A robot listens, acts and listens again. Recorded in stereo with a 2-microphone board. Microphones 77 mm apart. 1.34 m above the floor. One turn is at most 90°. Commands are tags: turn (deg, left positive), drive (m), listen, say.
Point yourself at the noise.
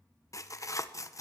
<turn deg="45"/>
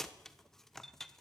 <say>Found it: tearing paper, straight ahead, 1 to 2 m away.</say>